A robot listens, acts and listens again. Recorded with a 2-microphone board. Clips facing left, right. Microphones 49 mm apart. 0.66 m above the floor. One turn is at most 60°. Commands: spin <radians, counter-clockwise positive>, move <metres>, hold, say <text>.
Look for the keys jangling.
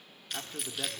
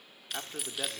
spin -0.52
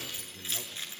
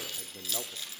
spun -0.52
spin 0.44
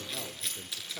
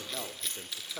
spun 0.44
say Facing the keys jangling, over 4 m away.